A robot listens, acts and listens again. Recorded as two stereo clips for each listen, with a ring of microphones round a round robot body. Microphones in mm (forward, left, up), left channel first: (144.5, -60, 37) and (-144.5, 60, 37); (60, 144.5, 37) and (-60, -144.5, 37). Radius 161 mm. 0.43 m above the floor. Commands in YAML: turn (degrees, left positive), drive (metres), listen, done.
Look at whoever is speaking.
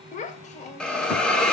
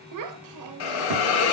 turn: -90
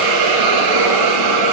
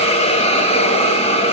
listen: true
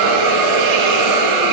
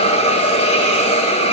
listen: true
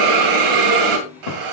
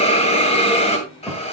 turn: -15
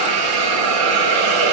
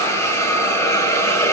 listen: true
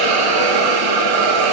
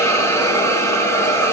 listen: true
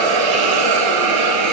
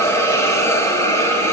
done: "I heard a child speaking from this way, but can't make it out now."